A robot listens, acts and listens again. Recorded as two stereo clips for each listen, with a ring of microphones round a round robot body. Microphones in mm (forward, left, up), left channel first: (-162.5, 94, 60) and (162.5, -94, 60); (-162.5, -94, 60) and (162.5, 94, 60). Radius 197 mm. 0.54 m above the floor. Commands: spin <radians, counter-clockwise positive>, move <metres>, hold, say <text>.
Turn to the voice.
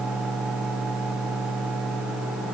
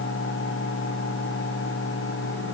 hold
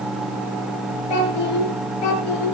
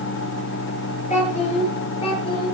spin 2.27
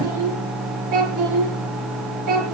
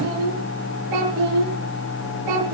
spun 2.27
spin 0.17
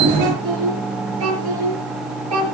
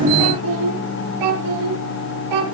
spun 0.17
say Found it: a child speaking, straight ahead, over 4 m away.